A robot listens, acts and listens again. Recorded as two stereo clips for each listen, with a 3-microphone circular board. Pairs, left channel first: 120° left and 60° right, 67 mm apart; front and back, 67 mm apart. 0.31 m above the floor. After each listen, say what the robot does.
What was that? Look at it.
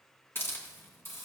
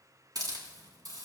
Turn 175° left.
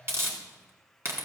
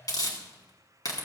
Turn 10° right.
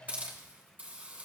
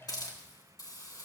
Found it: a hiss, straight ahead.